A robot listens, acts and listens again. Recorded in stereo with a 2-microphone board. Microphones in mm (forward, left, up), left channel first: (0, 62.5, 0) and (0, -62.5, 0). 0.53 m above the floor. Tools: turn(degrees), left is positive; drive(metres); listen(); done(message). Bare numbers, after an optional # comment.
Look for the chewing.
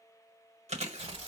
# The chewing: about 55° right or 125° right.
turn(-55)
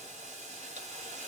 listen()
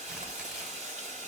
listen()
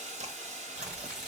done("I heard chewing, but can't make it out now. It was about straight ahead or 70° right.")